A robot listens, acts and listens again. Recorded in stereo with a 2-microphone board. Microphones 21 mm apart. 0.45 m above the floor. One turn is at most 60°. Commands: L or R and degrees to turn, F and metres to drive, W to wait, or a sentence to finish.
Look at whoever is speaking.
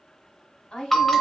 L55
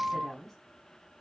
L20
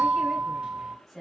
Found it: a woman speaking, straight ahead.